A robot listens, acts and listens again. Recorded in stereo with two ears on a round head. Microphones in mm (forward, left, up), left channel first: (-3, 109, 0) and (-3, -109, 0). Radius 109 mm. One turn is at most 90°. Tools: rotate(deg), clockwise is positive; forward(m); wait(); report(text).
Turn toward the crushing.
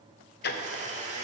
wait()
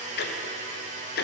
wait()
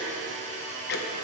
report("I can't make out crushing, only a blender and ticking.")